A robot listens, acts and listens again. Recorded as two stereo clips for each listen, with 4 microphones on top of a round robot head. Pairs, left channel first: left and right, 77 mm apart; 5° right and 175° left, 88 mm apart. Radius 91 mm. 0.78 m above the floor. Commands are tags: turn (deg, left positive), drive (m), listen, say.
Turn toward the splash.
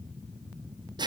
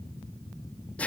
<listen/>
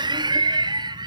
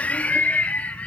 <listen/>
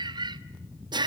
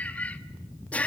<say>I can't make out a splash to turn to.</say>